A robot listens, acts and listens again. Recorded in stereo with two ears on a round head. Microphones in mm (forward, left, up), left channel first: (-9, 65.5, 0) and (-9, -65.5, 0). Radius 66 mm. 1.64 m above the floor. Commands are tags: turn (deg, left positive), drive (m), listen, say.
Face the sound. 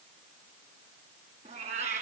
<turn deg="-45"/>
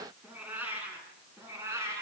<turn deg="-20"/>
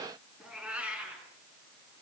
<turn deg="-10"/>
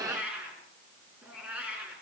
<turn deg="-10"/>
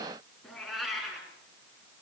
<say>Found it: a cat meowing, straight ahead.</say>